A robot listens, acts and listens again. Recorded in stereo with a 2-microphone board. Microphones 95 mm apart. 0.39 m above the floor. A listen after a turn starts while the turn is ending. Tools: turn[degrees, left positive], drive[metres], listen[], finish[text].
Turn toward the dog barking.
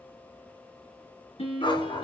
Thought: The dog barking: about 55° left or 125° left.
Action: turn[55]
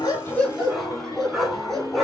Action: finish[Found it: a dog barking, straight ahead, 2 to 4 m away.]